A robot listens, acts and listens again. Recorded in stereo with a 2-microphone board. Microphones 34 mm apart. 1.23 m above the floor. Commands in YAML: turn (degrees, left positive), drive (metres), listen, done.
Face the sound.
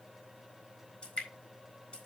turn: 30
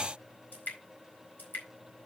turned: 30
turn: 115
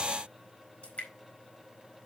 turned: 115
turn: 35
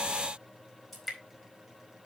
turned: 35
done: "Found it: dripping, straight ahead."